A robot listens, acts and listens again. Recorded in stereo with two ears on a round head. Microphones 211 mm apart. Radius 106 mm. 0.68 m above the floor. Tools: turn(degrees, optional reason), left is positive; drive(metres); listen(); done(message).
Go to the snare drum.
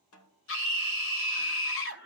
turn(degrees=70, reason="The snare drum: about 70° left or 110° left.")
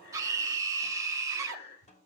turn(degrees=30, reason="So it is at 30° left.")
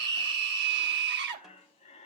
listen()
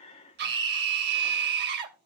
listen()
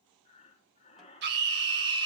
done("I heard a snare drum from this way, but can't make it out now. I did not reach it.")